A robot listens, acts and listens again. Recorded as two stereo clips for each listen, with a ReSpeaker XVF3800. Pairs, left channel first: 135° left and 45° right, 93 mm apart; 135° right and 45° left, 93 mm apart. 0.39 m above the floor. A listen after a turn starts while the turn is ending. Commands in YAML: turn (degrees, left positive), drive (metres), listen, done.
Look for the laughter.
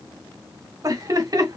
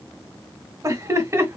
turn: -10
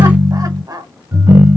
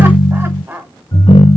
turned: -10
turn: -20
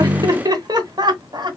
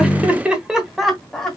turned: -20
turn: -50
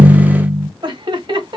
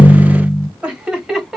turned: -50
turn: -40
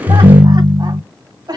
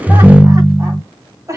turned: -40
turn: -10
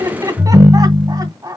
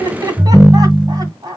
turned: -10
done: "Facing the laughter."